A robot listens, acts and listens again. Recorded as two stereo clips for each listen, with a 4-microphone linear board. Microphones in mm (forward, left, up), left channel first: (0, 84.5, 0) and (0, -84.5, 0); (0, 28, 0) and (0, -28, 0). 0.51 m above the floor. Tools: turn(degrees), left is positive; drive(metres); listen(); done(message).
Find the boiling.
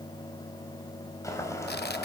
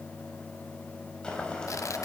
turn(degrees=15)
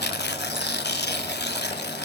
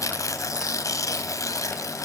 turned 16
listen()
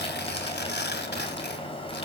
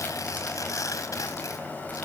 turn(degrees=150)
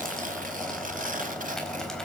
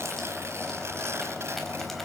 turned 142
done("Facing the boiling.")